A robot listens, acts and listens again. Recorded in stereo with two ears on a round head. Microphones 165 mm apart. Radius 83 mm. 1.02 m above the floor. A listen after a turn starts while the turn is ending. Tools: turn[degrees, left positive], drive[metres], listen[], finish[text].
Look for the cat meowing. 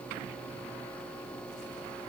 Action: listen[]
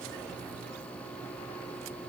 Action: listen[]
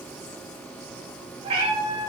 Thought: The cat meowing: about 25° right or 155° right.
Action: turn[-25]
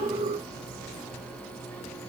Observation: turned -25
Action: listen[]
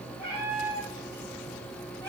Thought: So it is at 15° left.
Action: turn[15]
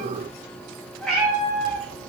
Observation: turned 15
Action: finish[Found it: a cat meowing, straight ahead.]